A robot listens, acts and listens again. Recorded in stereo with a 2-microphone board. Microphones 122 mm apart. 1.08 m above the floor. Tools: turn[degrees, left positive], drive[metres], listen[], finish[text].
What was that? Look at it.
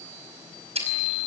Thought: The chewing: about 60° right or 120° right.
Action: turn[-60]
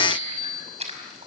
Thought: So it is at 60° right.
Action: turn[-60]
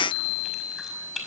Action: finish[Facing the chewing.]